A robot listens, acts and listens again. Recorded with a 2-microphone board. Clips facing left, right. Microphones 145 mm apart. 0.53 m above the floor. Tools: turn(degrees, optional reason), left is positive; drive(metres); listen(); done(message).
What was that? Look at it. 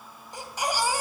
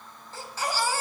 turn(degrees=30)
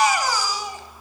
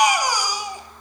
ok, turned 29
turn(degrees=-15, reason="So it is at 15° right.")
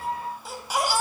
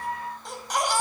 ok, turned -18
done("Facing the baby crying, 2 to 4 m away.")